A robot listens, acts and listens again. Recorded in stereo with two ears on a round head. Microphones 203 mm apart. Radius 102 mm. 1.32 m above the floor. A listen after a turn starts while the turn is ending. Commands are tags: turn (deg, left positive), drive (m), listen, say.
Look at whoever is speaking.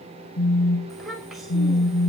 <turn deg="30"/>
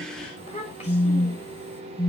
<turn deg="150"/>
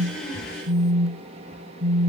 <listen/>
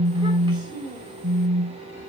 <turn deg="-20"/>
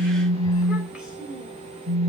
<say>Found it: a child speaking, straight ahead, over 4 m away.</say>